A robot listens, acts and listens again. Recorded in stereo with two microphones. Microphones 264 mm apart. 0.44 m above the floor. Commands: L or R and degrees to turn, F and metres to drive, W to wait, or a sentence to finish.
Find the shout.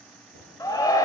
L30
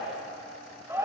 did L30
R10
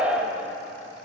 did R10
Facing the shout.